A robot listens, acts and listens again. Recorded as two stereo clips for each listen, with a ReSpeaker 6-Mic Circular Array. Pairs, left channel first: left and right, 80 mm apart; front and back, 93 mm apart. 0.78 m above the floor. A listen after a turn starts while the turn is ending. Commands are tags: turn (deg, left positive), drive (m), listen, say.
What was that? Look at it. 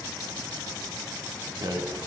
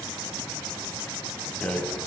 <turn deg="-75"/>
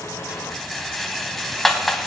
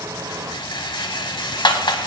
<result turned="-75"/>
<say>Facing the rattle.</say>